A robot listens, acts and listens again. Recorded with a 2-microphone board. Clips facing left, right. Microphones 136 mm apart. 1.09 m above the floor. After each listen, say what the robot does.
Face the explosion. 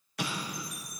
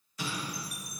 Turn 65° left.
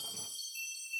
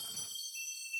Keep listening.
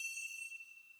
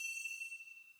I heard an explosion, but can't make it out now. It was about straight ahead or 50° left.